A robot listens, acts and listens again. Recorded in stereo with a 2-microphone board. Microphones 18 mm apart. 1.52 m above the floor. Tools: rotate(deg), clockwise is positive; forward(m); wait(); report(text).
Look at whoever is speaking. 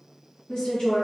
rotate(-50)
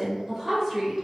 report("Found it: a woman speaking, straight ahead.")